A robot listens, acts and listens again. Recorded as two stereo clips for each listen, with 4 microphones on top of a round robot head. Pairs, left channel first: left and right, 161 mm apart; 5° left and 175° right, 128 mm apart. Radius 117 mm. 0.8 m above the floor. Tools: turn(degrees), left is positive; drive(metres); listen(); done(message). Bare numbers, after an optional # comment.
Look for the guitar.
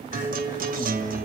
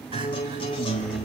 # The guitar: 60° right.
turn(-60)
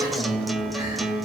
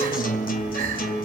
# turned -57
done("Found it: a guitar, straight ahead.")